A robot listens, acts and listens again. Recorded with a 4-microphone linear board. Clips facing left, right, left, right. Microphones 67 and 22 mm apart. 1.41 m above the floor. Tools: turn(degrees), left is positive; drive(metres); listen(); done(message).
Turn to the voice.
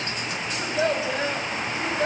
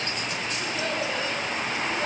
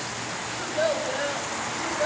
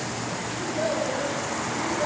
turn(degrees=40)
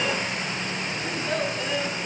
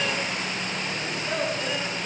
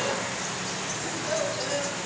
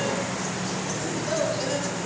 done("Facing the child speaking, over 4 m away.")